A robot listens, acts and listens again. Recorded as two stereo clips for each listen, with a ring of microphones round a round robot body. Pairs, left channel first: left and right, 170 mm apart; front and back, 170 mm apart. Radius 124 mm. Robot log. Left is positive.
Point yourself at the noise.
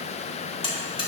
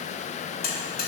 note: The buzzer: 30° left.
cmd yaw +30
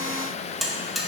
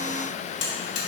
end: Facing the buzzer, 1 to 2 m away.